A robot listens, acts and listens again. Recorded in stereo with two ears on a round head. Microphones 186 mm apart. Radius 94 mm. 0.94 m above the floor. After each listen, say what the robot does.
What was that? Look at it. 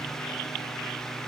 Keep listening.
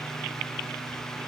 Keep listening.
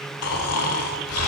Turn 90° left.
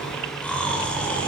Facing the snoring.